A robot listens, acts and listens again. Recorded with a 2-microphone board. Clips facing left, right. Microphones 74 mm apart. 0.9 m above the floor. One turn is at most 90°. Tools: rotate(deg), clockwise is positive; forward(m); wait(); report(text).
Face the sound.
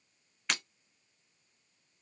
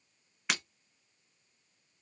rotate(30)
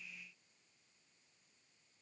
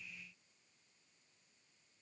wait()
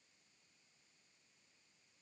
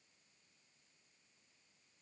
report("I heard breaking glass, but can't make it out now. It was about 25° left or 145° right.")